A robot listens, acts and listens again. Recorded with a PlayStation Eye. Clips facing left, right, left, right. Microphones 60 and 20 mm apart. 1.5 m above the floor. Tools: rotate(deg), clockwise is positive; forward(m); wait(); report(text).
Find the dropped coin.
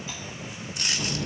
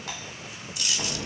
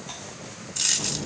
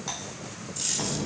rotate(-50)
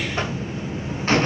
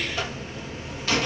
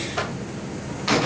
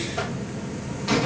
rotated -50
wait()
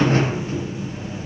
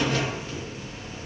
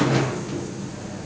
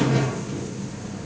report("I heard a dropped coin, but can't make it out now. It was about straight ahead or 80° left.")